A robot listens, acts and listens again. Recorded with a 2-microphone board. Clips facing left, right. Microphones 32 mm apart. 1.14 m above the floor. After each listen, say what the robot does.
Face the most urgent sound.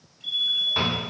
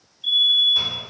Turn 35° right.
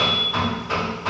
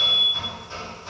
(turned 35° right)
Found it: a fire alarm, straight ahead.